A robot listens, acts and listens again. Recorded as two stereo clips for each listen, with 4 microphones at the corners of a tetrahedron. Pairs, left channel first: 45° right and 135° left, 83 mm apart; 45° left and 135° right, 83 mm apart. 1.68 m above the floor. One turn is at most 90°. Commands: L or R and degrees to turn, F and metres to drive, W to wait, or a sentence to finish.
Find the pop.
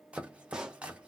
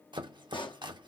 L55
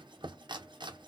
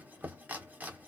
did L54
I heard a pop from this way, but can't make it out now.